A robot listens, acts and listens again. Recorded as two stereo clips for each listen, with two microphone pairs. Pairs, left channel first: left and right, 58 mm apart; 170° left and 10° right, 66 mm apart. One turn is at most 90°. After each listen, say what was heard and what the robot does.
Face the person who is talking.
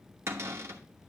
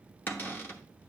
Keep listening.
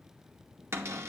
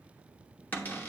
Keep listening.
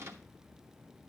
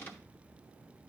I can't make out anyone speaking to turn to.